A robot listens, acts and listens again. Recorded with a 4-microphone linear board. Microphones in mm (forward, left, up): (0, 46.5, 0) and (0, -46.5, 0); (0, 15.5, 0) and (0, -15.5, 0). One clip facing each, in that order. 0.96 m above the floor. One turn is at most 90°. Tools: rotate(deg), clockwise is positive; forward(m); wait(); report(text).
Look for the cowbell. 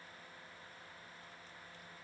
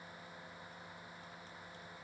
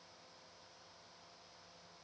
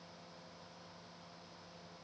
wait()
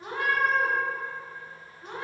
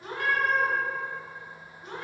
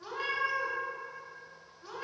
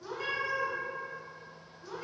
wait()
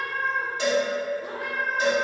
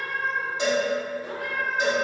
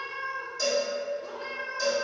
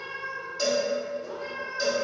rotate(20)
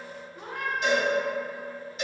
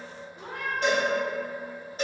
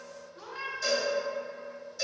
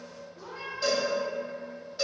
rotate(90)
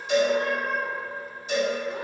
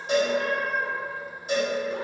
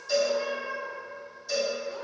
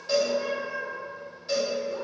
rotate(55)
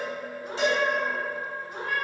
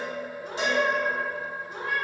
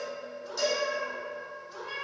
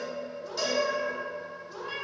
rotate(20)
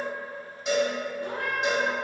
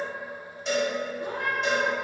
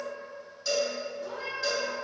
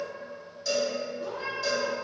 report("Found it: a cowbell, straight ahead, 1 to 2 m away.")